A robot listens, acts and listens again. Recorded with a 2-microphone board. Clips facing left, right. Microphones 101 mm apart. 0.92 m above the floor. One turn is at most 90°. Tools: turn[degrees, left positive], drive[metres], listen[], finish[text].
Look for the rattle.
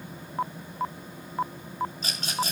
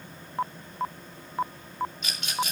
Thought: The rattle: about 35° left or 145° left.
Action: turn[35]
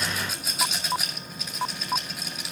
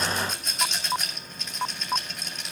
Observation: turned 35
Action: finish[Found it: a rattle, straight ahead.]